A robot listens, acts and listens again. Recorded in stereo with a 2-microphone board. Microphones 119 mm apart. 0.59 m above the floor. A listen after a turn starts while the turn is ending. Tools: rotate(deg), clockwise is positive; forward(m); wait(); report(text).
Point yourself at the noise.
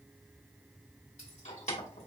rotate(-70)
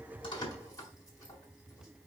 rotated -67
rotate(-30)
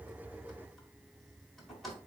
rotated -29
report("Found it: keys jangling, straight ahead, 1 to 2 m away.")